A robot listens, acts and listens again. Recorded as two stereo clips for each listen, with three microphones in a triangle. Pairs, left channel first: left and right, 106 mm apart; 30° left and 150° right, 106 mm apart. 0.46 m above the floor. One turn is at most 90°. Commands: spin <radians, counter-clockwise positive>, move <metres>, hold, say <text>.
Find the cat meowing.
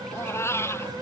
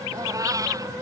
spin 1.57
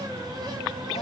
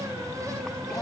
spin 1.13
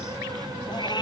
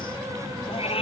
spin 0.79
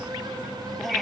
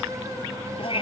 say Found it: a cat meowing, straight ahead.